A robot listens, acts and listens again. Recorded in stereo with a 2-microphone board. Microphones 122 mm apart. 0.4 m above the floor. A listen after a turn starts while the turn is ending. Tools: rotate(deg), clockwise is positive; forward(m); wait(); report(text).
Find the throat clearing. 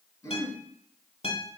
rotate(-30)
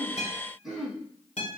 report("Found it: throat clearing, straight ahead, under 1 m away.")